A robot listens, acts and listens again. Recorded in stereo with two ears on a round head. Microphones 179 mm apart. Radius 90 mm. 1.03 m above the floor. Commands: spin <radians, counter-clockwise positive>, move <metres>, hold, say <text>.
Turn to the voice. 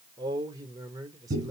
spin -0.35
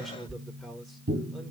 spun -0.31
say Facing the man speaking.